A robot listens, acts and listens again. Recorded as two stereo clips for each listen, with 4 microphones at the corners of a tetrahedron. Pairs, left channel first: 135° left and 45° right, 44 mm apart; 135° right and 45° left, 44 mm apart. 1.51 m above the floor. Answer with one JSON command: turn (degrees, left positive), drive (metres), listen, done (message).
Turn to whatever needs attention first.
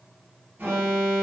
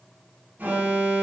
{"done": "Facing the alarm."}